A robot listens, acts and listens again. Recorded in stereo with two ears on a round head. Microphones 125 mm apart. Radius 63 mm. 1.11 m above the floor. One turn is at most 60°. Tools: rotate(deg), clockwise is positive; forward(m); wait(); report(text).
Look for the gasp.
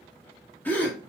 rotate(-30)
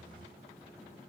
wait()
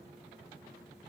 report("I heard a gasp, but can't make it out now. It was about 15° right or 135° left.")